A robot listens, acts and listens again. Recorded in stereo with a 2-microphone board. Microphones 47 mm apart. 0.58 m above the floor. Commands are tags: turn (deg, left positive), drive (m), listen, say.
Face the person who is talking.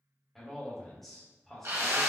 <turn deg="30"/>
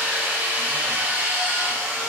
<listen/>
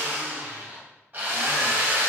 <listen/>
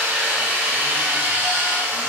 <say>I heard a man speaking, but can't make it out now. It was about 25° right or 145° left.</say>